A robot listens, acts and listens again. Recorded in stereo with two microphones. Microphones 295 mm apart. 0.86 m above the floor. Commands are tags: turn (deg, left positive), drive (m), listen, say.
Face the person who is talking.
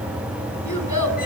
<turn deg="90"/>
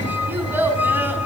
<say>Found it: a child speaking, straight ahead.</say>